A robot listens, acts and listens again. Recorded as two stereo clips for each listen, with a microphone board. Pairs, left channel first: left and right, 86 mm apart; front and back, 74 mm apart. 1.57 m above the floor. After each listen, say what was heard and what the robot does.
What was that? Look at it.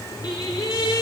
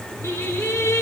The singing: 55° left. Turn 55° left.
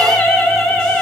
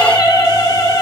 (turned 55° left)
The singing is now 15° left. Turn 15° left.
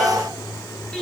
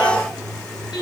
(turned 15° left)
Keep listening.
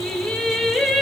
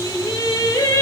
Found it: singing, straight ahead, 1 to 2 m away.